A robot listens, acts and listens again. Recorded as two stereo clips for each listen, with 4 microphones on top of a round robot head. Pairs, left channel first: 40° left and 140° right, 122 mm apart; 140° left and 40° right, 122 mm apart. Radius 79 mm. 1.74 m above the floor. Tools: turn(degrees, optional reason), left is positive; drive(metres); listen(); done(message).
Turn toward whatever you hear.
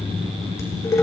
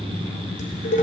turn(degrees=110, reason="The dishes clattering: 110° left.")
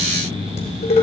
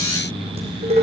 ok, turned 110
done("Found it: dishes clattering, straight ahead.")